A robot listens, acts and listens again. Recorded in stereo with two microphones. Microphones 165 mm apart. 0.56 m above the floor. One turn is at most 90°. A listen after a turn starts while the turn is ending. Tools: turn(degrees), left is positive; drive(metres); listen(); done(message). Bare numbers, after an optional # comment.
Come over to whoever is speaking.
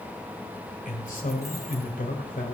# The man speaking: about 55° left or 125° left.
turn(55)
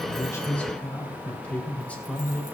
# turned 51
# So it is at 10° left.
turn(10)
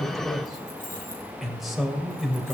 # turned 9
drive(1.0)
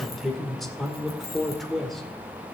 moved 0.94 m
drive(1.0)
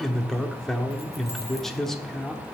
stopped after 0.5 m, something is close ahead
done("Arrived at the man speaking, straight ahead.")